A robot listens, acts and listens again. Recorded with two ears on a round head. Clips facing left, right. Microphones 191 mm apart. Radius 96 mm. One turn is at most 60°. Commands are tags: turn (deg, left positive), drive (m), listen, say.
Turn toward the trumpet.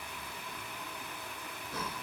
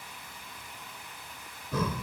<listen/>
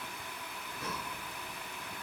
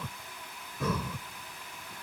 <listen/>
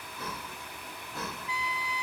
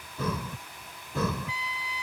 <turn deg="60"/>
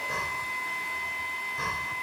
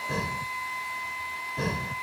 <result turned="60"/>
<turn deg="20"/>
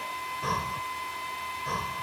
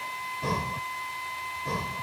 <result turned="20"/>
<say>Facing the trumpet.</say>